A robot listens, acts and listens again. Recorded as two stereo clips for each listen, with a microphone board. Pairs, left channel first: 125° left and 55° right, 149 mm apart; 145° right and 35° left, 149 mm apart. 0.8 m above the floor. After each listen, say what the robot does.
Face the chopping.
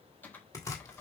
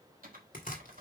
Turn 170° right.
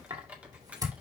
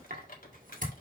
Turn 10° left.
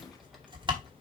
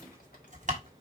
Facing the chopping, 2 to 4 m away.